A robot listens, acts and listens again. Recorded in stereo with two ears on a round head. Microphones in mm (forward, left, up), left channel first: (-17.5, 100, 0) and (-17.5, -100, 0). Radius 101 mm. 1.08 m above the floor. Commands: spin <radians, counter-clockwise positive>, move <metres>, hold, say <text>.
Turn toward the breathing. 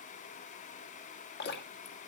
hold
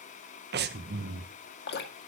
spin -0.87
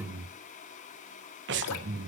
spin -1.22
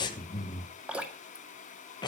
spin 0.35
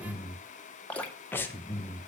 spin 0.17
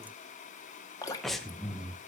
say Found it: breathing, straight ahead.